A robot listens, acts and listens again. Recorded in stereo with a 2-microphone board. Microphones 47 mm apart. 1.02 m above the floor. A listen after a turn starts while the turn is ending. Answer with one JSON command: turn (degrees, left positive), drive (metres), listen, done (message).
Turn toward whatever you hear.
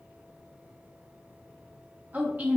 {"turn": -35}
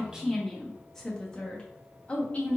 {"turn": 35}
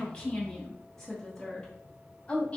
{"turn": 20}
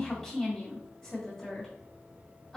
{"done": "Facing the woman speaking, 1 to 2 m away."}